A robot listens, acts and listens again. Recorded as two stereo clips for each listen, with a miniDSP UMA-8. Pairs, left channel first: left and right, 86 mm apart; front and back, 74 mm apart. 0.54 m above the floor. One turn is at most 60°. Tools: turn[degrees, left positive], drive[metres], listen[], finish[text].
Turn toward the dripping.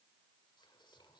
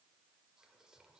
Action: listen[]
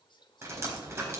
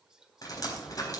Thought: The dripping: 30° right.
Action: turn[-30]
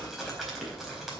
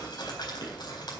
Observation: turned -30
Action: finish[Facing the dripping, over 4 m away.]